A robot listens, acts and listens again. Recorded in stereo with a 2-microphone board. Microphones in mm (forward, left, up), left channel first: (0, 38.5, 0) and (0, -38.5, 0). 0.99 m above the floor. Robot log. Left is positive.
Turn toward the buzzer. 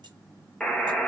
cmd yaw +30
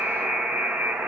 note: So it is at 20° right.
cmd yaw -20
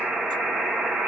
end: Facing the buzzer.